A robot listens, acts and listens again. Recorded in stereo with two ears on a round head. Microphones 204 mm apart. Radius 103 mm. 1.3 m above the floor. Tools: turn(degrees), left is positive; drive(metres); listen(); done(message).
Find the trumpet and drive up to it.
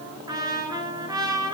turn(degrees=-15)
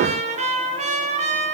turn(degrees=-150)
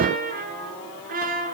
turn(degrees=-40)
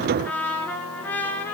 turn(degrees=10)
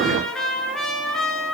drive(metres=1.0)
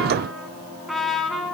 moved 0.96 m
drive(metres=1.0)
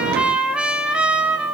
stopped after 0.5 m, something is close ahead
done("I am next to the trumpet.")